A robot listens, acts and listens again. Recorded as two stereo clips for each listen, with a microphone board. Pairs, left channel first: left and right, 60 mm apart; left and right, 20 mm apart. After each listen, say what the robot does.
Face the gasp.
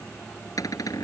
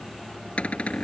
Keep listening.
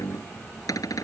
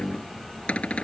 Keep listening.
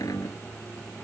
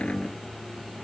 I can't make out a gasp to turn to.